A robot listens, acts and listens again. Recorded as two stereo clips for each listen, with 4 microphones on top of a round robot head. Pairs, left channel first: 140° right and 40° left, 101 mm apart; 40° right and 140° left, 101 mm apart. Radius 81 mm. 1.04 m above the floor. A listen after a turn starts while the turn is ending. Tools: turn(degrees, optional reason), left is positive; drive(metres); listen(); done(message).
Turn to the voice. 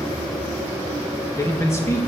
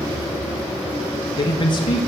turn(degrees=-75, reason="The man speaking: 75° right.")
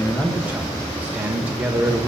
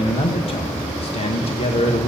turn(degrees=-35, reason="The man speaking is now 35° right.")
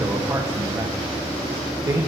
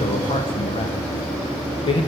turn(degrees=-15, reason="The man speaking is now 15° right.")
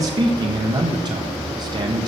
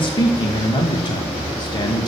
done("Found it: a man speaking, straight ahead, 1 to 2 m away.")